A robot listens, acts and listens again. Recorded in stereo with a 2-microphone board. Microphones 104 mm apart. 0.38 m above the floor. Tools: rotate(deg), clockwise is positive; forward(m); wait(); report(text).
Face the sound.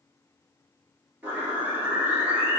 rotate(30)
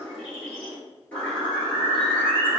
rotate(-15)
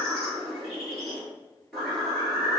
report("Found it: a bird, straight ahead.")